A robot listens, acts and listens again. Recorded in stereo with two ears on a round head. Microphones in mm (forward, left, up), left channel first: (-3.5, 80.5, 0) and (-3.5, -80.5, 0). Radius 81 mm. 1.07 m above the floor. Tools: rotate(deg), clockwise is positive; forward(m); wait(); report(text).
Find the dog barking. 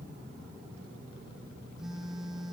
wait()
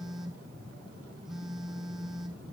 wait()
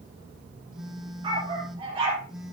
rotate(25)
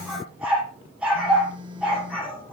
report("Facing the dog barking.")